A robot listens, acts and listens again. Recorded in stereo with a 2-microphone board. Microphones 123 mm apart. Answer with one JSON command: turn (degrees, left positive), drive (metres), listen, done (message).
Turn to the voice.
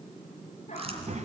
{"turn": -75}
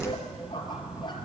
{"turn": -10}
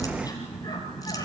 {"done": "Facing the child speaking, 2 to 4 m away."}